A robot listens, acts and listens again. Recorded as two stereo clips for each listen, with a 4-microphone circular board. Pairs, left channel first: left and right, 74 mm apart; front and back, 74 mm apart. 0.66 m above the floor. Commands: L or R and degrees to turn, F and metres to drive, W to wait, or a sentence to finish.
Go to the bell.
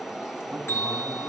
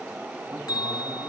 L35
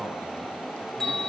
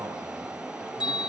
F1.0
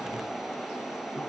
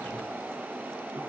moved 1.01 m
W
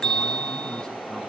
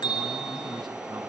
L10
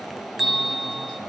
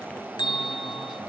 F1.0
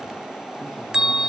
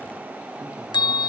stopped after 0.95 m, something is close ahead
R10
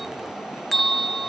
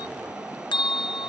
I am next to the bell.